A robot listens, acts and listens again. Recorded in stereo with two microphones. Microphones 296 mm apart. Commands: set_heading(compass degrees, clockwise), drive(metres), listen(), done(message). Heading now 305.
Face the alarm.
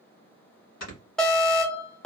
set_heading(275)
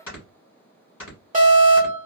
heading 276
set_heading(306)
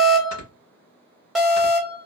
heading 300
done("Facing the alarm, 1 to 2 m away.")